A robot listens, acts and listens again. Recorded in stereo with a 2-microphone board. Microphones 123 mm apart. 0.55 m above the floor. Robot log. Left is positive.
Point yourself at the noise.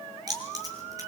note: The keys jangling: about 30° right or 150° right.
cmd yaw -30
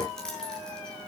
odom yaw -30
end: Facing the keys jangling, over 4 m away.